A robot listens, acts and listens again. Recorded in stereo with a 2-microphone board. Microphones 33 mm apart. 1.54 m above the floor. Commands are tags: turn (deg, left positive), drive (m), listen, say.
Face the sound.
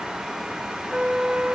<turn deg="-45"/>
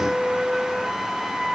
<turn deg="-15"/>
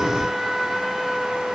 <say>Found it: a flute, straight ahead.</say>